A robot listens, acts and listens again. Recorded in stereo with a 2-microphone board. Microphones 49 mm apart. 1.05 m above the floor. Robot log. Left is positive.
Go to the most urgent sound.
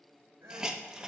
note: The crying: about 65° right or 115° right.
cmd yaw -65
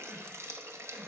cmd idle
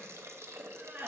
note: So it is at 50° right.
cmd yaw -50
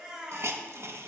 note: The crying is now 20° right.
cmd yaw -20
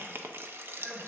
cmd idle
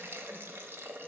cmd idle
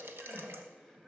end: Facing where the crying came from. I can't hear it now. I did not reach it.